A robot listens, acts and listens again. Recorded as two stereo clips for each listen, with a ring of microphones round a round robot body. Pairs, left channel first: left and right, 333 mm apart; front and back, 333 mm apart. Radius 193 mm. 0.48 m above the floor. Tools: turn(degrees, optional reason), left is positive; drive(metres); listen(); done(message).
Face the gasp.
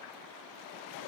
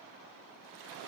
listen()
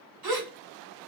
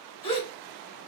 turn(degrees=-75, reason="The gasp: 75° right.")
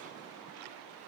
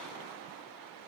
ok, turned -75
done("I heard a gasp from this way, but can't make it out now.")